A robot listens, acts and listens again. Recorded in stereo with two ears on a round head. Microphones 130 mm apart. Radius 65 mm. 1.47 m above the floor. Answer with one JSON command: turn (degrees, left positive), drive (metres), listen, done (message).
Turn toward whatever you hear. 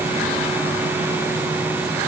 {"listen": true}
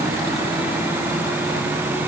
{"listen": true}
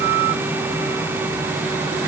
{"done": "I can't make out anything to turn to."}